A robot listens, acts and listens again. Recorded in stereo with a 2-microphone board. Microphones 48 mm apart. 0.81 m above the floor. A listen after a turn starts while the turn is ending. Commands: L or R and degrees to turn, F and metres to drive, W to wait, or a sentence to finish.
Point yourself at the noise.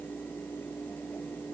W
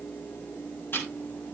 L45
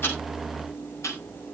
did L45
L85
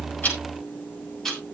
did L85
L10
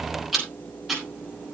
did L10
Found it: ticking, straight ahead.